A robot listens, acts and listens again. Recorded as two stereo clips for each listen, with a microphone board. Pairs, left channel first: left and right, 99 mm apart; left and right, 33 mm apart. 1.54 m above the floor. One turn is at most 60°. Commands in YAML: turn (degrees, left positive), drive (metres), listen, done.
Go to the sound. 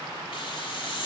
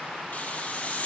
turn: 55
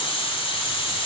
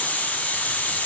turn: 60
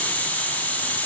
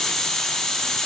turn: 20
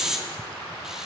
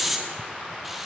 drive: 1.0
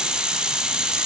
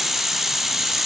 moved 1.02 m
turn: -10
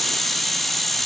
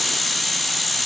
drive: 1.0
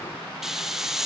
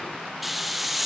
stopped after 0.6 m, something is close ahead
done: "Arrived at the hiss, straight ahead."